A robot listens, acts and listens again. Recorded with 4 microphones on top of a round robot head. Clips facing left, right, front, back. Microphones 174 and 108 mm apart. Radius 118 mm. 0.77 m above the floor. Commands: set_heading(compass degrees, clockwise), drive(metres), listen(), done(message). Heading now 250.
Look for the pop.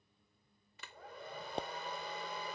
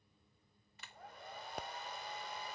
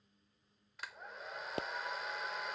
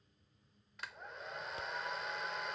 set_heading(225)
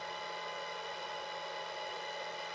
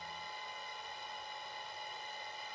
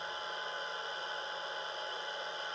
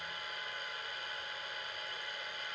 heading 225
done("Facing where the pop came from. I can't hear it now.")